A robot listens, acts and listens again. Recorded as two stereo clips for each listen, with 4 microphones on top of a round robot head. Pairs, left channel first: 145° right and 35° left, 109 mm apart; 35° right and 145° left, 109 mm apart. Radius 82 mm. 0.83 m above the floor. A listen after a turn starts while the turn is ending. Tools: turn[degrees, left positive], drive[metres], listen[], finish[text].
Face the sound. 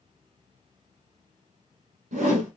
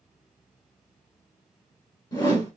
Thought: The whoosh: 25° left.
Action: turn[25]
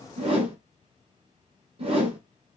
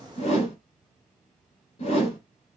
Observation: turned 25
Action: finish[Facing the whoosh.]